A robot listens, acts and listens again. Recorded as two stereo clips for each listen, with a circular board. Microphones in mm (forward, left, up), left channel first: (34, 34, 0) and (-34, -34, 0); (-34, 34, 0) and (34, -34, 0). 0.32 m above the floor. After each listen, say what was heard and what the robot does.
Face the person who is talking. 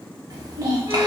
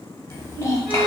The child speaking: 175° right. Turn 175° right.
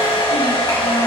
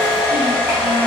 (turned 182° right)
Nothing new. It was at 10° left. Turn 10° left.
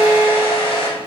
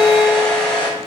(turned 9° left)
Keep listening.
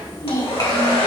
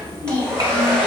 Found it: a child speaking, straight ahead, 1 to 2 m away.